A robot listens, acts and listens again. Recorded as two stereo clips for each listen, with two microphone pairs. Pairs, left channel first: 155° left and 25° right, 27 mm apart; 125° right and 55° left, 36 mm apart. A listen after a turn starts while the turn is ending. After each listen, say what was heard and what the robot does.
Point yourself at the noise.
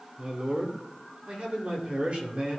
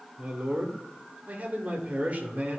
The man speaking: 10° left. Turn 10° left.
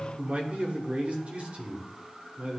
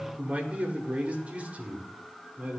Facing the man speaking.